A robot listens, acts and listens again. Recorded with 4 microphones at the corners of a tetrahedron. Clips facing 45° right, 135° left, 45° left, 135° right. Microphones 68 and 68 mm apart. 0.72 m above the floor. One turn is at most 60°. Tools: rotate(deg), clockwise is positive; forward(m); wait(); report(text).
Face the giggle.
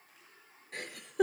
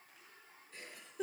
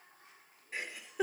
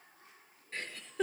rotate(35)
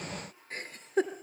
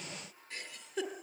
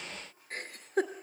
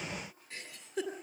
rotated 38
report("Facing the giggle, 2 to 4 m away.")